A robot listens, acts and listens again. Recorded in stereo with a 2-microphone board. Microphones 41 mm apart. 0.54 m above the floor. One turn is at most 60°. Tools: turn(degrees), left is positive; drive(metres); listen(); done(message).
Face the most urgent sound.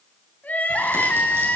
turn(degrees=45)
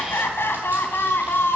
turn(degrees=60)
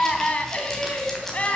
turn(degrees=35)
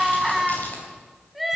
done("Facing the crying.")